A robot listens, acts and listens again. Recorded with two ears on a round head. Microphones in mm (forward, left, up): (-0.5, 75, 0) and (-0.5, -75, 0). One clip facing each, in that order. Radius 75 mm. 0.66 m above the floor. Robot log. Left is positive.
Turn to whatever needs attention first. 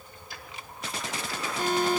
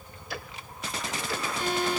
note: The alarm: about 40° left or 140° left.
cmd yaw +40
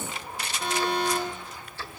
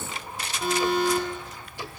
end: Found it: an alarm, straight ahead, over 4 m away.